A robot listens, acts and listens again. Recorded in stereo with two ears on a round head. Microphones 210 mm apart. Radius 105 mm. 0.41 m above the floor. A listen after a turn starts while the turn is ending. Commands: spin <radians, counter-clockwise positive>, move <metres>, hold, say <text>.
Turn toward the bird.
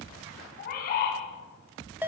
spin 0.70
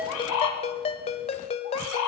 spin 1.66
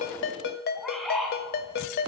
say Found it: a bird, straight ahead, 2 to 4 m away.